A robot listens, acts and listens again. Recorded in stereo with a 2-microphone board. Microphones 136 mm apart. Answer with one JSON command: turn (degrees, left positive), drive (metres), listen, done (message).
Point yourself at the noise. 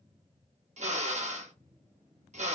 {"turn": -60}
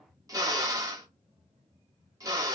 {"turn": -30}
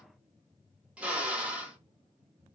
{"turn": -10}
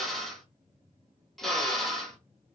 {"done": "Found it: a drill, straight ahead, 1 to 2 m away."}